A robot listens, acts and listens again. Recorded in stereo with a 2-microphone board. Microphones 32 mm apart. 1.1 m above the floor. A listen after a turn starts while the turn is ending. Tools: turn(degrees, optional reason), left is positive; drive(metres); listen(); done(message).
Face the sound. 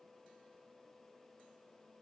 listen()
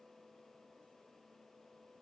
listen()
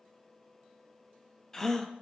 turn(degrees=30)
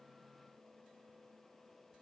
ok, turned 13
listen()
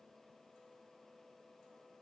done("I heard a gasp, but can't make it out now. It was about straight ahead or 150° left.")